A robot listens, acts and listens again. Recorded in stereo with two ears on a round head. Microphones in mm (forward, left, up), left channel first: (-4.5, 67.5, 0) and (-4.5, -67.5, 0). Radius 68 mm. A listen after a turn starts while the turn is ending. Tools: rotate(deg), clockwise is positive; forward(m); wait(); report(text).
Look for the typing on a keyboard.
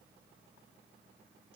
wait()
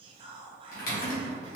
rotate(-60)
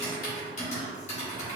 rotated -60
rotate(-50)
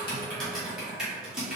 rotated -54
report("Found it: typing on a keyboard, straight ahead, 1 to 2 m away.")